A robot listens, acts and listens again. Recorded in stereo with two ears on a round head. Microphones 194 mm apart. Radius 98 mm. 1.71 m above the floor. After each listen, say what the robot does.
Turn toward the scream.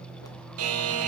Keep listening.
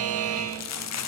Keep listening.
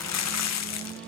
I can't make out a scream, only crumpling and a buzzer.